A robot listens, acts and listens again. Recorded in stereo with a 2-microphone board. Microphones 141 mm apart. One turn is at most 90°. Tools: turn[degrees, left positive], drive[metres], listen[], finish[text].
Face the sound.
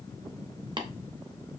Thought: The tapping: about 35° right or 145° right.
Action: turn[-35]
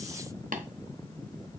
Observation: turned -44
Thought: So it is at 105° right.
Action: turn[-90]
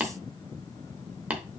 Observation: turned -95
Thought: The tapping is now 10° right.
Action: turn[-10]
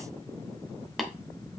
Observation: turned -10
Action: finish[Found it: tapping, straight ahead.]